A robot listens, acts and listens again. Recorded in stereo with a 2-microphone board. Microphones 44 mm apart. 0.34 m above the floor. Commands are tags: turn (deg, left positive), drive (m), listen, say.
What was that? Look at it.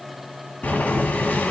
<turn deg="35"/>
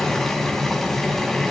<say>Facing the boiling, 2 to 4 m away.</say>